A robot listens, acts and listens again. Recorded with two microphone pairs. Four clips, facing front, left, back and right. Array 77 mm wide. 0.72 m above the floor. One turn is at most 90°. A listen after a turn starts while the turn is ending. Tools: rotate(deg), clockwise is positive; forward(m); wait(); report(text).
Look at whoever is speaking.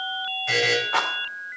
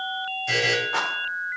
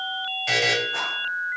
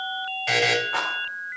wait()
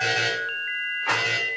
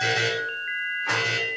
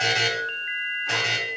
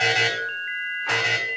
wait()
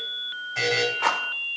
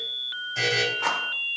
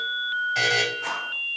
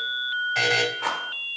report("I can't make out anyone speaking, only a buzzer.")